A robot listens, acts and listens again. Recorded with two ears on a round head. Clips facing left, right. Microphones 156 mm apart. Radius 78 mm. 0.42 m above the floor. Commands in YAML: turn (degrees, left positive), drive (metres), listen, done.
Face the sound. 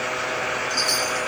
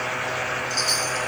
turn: 30
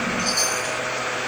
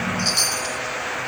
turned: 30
turn: -25
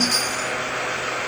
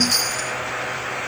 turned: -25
turn: -10
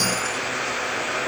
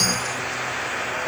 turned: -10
done: "Found it: a chime, straight ahead, 1 to 2 m away."